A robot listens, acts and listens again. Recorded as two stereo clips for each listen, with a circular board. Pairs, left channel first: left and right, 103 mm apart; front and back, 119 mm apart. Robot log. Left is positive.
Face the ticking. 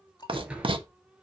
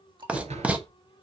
note: The ticking: 135° left.
cmd yaw +135
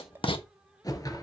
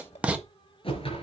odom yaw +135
note: The ticking is now 20° right.
cmd yaw -20
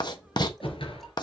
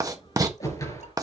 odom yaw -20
cmd idle
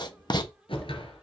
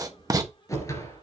cmd idle
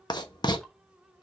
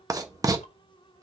end: Facing where the ticking came from. I can't hear it now.